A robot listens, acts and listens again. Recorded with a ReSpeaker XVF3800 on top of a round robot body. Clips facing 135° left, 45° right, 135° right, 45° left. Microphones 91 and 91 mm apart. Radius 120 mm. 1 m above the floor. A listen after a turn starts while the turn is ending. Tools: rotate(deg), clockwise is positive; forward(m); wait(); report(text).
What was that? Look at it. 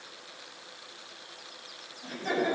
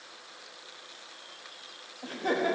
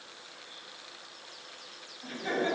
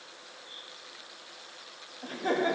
report("Found it: laughter, straight ahead, 2 to 4 m away.")